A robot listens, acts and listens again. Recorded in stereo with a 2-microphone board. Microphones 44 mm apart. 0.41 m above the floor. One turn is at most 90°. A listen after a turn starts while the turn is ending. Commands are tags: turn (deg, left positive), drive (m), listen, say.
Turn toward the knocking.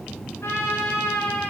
<listen/>
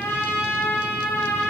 <listen/>
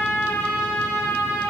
<say>I can't make out knocking to turn to.</say>